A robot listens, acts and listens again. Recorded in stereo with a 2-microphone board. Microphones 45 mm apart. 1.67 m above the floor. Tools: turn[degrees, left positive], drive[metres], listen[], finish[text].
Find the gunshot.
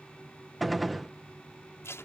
Action: turn[30]
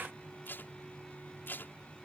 Action: listen[]
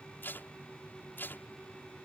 Action: finish[I heard a gunshot, but can't make it out now. It was about 30° right or 150° left.]